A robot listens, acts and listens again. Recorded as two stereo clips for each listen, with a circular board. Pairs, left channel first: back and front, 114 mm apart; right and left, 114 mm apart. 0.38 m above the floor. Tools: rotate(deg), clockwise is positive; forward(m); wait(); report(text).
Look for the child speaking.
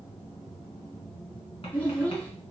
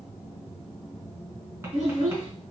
rotate(-105)
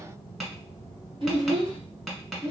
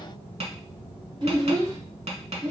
rotate(-40)
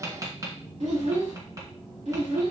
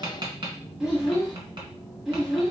report("Found it: a child speaking, straight ahead.")